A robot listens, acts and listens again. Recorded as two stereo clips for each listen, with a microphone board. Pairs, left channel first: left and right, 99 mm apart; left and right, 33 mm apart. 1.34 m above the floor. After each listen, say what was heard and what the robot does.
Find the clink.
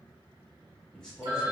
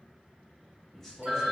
Keep listening.
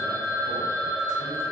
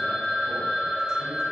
Keep listening.
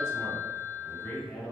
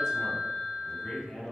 I can't make out a clink, only a phone ringing and a man speaking.